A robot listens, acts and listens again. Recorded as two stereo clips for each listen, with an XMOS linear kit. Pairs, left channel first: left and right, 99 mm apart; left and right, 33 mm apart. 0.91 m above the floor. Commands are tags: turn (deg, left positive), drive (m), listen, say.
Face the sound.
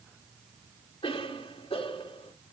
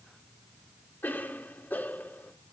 <turn deg="90"/>
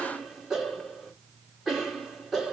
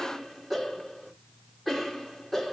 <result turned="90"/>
<say>Found it: a cough, straight ahead, 2 to 4 m away.</say>